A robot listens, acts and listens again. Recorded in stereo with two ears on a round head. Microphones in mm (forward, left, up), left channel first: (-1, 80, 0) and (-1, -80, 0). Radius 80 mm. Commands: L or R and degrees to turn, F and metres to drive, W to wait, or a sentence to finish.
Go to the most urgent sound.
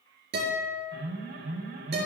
R70
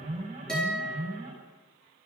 R40
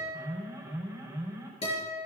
R15
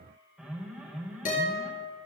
F1.0
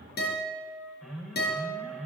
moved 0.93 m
F1.0
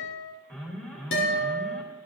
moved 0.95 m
L10
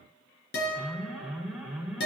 F1.0
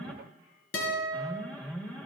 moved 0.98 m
F1.0
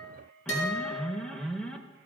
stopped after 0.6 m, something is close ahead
Arrived at the alarm, straight ahead.